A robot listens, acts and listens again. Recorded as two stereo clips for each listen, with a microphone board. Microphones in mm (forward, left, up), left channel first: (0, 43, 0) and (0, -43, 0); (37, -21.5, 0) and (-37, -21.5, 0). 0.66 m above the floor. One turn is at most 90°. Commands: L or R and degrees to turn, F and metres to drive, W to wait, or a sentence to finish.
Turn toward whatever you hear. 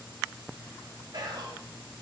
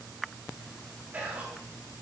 R90
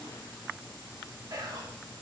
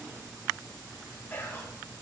R60
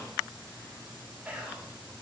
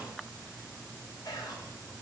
R15
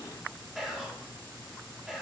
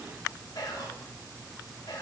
Facing the whispering.